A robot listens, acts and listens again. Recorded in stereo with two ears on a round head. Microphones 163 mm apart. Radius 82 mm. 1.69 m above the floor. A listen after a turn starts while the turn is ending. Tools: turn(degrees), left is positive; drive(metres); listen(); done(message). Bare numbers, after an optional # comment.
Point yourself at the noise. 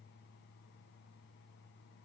listen()
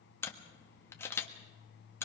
turn(30)
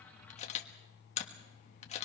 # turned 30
# So it is at 135° left.
turn(135)
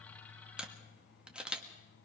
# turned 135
done("Facing the camera shutter.")